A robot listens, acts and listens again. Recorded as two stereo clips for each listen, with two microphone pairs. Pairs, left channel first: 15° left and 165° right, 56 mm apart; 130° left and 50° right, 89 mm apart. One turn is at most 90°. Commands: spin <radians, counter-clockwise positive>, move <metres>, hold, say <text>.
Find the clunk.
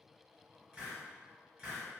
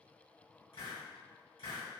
hold
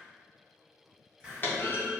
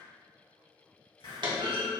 spin -0.52
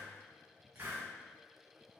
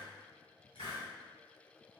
say Facing where the clunk came from. I can't hear it now.